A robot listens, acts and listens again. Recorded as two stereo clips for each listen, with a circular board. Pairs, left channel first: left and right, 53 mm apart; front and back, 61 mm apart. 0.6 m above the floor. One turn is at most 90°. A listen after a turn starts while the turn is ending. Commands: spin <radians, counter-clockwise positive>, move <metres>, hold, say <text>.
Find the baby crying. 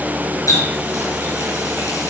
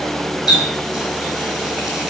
hold
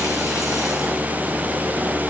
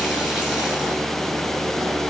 hold
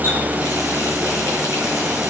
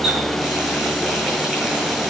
say I can't make out a baby crying to turn to.